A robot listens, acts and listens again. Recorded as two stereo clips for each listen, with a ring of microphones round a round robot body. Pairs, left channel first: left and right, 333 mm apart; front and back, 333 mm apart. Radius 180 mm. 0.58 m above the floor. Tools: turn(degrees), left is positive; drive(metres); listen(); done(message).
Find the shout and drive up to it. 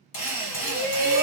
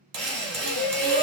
turn(degrees=60)
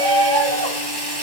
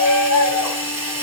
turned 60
turn(degrees=20)
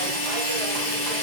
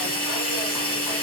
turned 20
listen()
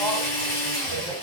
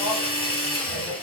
listen()
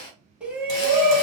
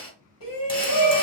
drive(metres=1.0)
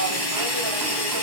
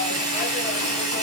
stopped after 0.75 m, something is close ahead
listen()
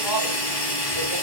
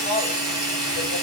done("Arrived at the shout, straight ahead.")